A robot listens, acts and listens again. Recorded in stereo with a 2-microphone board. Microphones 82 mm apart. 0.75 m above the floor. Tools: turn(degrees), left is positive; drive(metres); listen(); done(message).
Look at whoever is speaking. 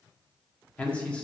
turn(degrees=30)
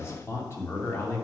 turn(degrees=150)
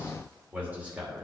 turn(degrees=-15)
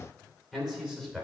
done("Found it: a man speaking, straight ahead.")